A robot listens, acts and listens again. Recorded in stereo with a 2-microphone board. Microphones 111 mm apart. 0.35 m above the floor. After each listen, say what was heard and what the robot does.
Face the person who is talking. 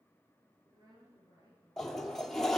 The woman speaking: about 40° right or 140° right. Turn 40° right.
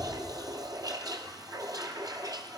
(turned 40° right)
Keep listening.
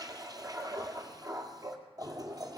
Keep listening.
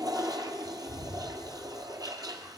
I heard a woman speaking, but can't make it out now. It was about straight ahead or 100° right.